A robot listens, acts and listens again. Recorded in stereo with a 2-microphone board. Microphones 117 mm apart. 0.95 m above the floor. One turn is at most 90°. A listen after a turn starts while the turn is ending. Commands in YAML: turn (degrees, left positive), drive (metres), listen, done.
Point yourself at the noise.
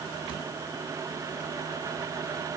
listen: true
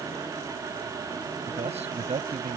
turn: -65
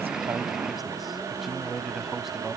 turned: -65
done: "Found it: a man speaking, straight ahead."